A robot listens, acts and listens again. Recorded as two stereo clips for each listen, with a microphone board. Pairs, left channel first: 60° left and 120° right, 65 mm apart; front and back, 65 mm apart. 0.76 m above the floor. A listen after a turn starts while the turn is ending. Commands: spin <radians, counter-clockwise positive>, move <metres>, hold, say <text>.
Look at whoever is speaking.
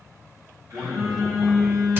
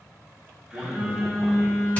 spin 2.79
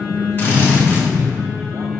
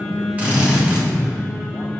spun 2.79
hold
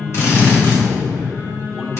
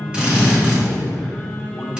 spin -0.44
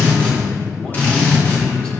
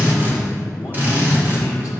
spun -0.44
hold
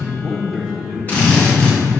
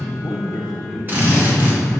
spin -0.17
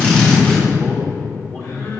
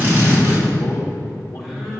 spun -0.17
say Facing the man speaking.